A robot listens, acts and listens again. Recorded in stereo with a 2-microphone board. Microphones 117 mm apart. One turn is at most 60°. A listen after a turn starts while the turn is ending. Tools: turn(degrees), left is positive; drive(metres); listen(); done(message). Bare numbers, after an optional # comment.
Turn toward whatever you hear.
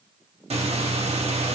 # The breathing: about 70° right or 110° right.
turn(-60)
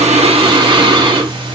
# So it is at 50° right.
turn(-50)
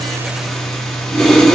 done("Found it: breathing, straight ahead.")